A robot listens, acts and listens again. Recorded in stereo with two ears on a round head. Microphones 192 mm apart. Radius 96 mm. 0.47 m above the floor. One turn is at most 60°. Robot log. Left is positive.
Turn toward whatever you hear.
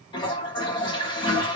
note: The toilet flushing: about 20° left or 160° left.
cmd yaw +20
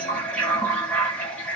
note: So it is at 10° left.
cmd yaw +10
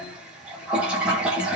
end: Found it: a toilet flushing, straight ahead.